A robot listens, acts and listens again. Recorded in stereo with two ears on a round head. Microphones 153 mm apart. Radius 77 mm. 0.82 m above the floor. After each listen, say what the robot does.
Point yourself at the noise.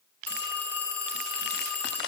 Turn 30° left.
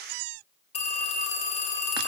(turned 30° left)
Turn 140° left.
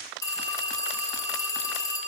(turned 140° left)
Turn 20° left.
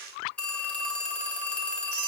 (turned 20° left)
Found it: a phone ringing, straight ahead, 2 to 4 m away.